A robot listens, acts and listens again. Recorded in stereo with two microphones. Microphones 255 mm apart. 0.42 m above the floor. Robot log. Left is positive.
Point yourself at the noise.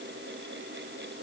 cmd idle
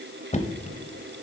note: The knocking: about 25° left or 155° left.
cmd yaw +25
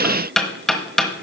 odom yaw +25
end: Found it: knocking, straight ahead, 1 to 2 m away.